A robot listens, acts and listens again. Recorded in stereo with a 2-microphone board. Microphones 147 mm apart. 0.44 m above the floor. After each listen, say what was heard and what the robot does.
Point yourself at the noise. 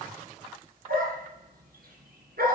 Turn 90° right.
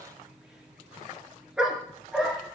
Facing the dog barking.